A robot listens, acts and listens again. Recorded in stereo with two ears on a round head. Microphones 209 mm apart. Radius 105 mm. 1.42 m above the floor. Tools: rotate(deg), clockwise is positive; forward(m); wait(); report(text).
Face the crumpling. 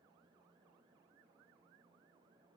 wait()
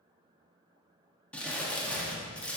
rotate(-30)
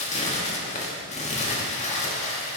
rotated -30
rotate(-145)
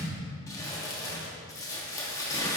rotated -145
rotate(-15)
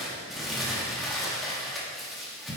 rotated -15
report("Facing the crumpling.")